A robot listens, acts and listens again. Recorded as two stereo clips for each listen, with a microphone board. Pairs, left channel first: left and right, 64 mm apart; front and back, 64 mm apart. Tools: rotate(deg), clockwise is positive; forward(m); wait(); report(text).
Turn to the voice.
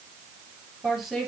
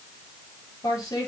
report("Found it: a woman speaking, straight ahead.")